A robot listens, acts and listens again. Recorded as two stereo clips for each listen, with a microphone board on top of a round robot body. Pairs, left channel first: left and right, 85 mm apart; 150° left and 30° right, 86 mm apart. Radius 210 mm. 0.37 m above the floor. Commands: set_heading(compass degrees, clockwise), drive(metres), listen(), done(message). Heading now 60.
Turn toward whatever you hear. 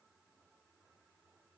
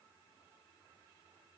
listen()
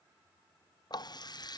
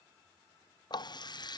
set_heading(300)
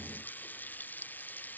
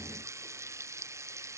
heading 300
set_heading(275)
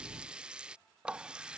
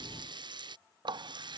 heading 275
set_heading(285)
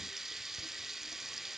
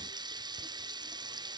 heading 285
done("Facing the running tap.")